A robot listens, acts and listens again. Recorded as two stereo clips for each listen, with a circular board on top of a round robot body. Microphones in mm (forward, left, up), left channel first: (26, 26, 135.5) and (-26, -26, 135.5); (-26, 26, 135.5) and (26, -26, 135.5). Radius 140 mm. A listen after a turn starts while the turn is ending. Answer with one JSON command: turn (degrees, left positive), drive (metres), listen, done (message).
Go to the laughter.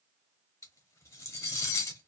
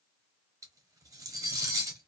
{"listen": true}
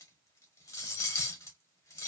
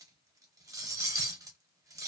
{"listen": true}
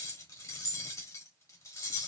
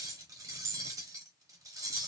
{"done": "I can't make out laughter, only cutlery clinking."}